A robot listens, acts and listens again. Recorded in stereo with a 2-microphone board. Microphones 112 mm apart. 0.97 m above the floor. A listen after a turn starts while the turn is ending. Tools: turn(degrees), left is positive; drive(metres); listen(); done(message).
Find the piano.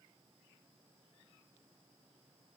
listen()
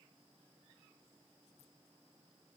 listen()
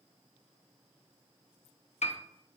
turn(degrees=90)
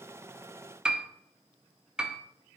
turn(degrees=-10)
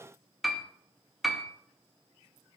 done("Facing the piano.")